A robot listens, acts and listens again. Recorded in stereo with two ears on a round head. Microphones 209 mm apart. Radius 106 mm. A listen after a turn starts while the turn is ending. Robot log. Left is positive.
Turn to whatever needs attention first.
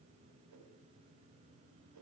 cmd idle
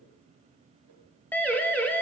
cmd yaw +30
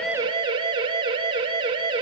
note: So it is at 20° right.
cmd yaw -20
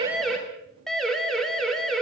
end: Facing the siren.